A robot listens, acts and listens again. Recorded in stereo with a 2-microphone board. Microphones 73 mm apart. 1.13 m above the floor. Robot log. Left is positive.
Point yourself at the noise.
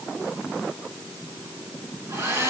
note: The hair dryer: about 30° right or 150° right.
cmd yaw -30
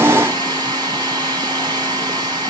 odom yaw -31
note: So it is at 115° right.
cmd yaw -115
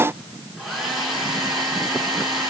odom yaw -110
end: Found it: a hair dryer, straight ahead, 2 to 4 m away.